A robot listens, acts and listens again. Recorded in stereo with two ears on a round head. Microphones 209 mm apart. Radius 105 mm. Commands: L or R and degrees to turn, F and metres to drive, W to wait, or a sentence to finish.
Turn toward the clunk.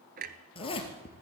R40
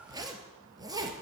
W
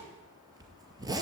I heard a clunk, but can't make it out now. It was about straight ahead or 100° right.